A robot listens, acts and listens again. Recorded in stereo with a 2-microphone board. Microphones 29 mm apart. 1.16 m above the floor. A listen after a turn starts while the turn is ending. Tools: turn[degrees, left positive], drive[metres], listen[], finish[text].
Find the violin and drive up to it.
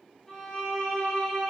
Thought: The violin: about 20° left or 160° left.
Action: turn[20]
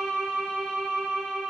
Action: drive[1.0]
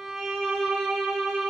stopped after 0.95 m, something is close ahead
Action: finish[Arrived at the violin, straight ahead.]